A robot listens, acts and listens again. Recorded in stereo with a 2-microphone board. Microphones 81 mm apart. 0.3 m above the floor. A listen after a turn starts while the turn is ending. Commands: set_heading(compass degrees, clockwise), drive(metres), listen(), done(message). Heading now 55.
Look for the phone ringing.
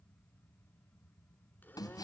listen()
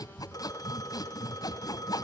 set_heading(5)
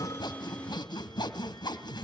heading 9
listen()
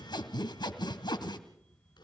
listen()
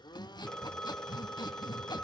set_heading(359)
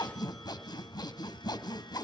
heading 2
listen()
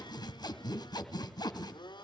listen()
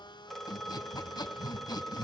done("Facing the phone ringing.")